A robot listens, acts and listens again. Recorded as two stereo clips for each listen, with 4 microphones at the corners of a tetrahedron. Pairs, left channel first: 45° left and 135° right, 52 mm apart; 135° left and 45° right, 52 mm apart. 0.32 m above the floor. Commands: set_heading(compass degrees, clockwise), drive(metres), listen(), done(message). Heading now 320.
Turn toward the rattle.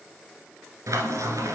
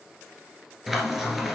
listen()
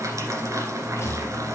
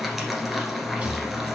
set_heading(305)
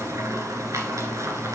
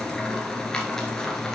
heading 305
listen()
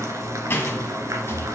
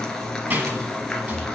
done("Found it: a rattle, straight ahead.")